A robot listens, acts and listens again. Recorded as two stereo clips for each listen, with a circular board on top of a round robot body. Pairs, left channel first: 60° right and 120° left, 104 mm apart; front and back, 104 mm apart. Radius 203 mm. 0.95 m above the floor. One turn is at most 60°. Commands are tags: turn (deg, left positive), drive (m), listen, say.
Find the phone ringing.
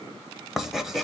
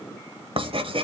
<listen/>
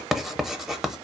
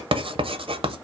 <listen/>
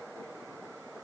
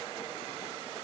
<say>I can't make out a phone ringing, only writing.</say>